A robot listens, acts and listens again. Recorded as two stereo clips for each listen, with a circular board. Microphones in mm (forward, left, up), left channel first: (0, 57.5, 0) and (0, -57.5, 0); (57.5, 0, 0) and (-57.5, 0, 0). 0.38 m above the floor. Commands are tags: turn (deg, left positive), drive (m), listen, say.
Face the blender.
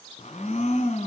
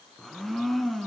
<turn deg="90"/>
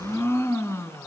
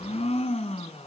<turn deg="25"/>
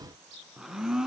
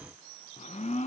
<say>Facing the blender.</say>